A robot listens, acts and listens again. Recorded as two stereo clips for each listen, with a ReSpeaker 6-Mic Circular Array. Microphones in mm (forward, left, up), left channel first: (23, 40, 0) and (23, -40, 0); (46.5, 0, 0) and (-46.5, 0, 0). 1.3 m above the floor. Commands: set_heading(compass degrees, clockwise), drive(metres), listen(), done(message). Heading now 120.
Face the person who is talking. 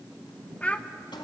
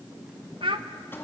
set_heading(320)
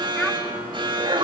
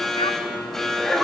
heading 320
listen()
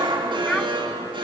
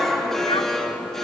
listen()
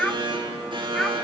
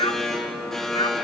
set_heading(310)
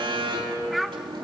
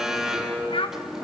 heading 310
done("Found it: a child speaking, straight ahead.")